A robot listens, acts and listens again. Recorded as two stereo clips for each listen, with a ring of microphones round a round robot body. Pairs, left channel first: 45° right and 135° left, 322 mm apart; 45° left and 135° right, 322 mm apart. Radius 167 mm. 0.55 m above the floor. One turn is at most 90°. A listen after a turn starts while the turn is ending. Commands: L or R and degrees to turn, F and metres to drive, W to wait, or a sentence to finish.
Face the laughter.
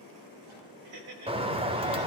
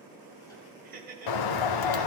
L90
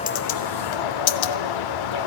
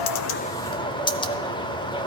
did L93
L70
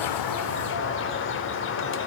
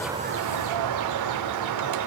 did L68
W
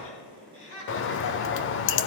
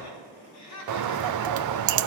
Found it: laughter, straight ahead.